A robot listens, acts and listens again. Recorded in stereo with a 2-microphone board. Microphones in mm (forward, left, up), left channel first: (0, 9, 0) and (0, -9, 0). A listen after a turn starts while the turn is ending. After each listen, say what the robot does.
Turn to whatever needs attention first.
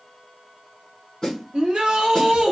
Turn 75° right.
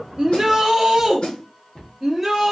Found it: a shout, straight ahead.